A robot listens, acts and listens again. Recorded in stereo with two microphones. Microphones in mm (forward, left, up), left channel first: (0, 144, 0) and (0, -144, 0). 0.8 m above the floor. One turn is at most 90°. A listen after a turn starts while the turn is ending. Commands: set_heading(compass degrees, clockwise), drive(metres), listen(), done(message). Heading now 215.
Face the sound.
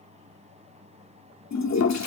set_heading(150)
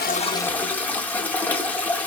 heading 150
done("Facing the toilet flushing.")